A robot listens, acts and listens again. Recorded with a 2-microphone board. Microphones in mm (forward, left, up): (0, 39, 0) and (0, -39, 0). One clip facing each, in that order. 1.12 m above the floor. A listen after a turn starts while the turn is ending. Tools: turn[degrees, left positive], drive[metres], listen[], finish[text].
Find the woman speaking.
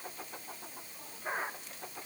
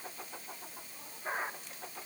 Action: listen[]
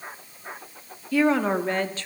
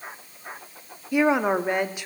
Action: turn[-30]
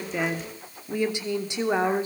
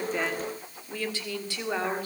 Thought: So it is at 20° left.
Action: turn[20]
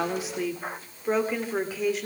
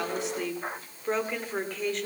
Action: finish[Facing the woman speaking, 2 to 4 m away.]